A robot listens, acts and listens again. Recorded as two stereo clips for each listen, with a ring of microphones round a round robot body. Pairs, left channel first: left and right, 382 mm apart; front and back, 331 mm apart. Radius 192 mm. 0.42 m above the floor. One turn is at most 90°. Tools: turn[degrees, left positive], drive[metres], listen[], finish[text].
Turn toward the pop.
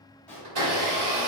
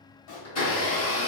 Action: finish[Found it: a pop, straight ahead.]